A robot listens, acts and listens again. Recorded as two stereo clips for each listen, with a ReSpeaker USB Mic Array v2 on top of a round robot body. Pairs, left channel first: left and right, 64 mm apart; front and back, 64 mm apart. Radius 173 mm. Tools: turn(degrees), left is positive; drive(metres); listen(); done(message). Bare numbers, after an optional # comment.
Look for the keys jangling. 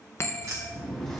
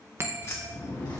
# The keys jangling: 45° right.
turn(-45)
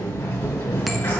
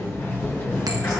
listen()
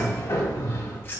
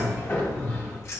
# The keys jangling is now 40° left.
turn(40)
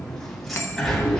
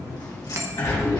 listen()
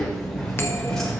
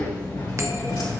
listen()
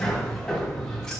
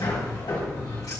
done("I heard keys jangling from this way, but can't make it out now.")